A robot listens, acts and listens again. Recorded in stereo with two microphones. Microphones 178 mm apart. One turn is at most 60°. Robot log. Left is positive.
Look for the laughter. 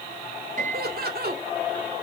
note: The laughter: about 65° right or 115° right.
cmd yaw -60
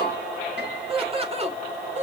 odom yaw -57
note: So it is at 40° right.
cmd yaw -40
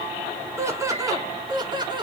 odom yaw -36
note: The laughter is now 25° right.
cmd yaw -25
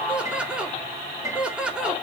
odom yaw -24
end: Facing the laughter, 2 to 4 m away.